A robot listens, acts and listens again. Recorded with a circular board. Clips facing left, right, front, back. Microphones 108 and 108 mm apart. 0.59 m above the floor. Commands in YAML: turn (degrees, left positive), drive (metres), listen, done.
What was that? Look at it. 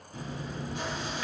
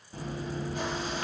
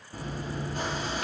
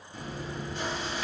turn: -45
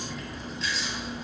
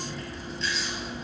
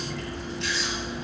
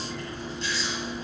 done: "Facing the chewing, 1 to 2 m away."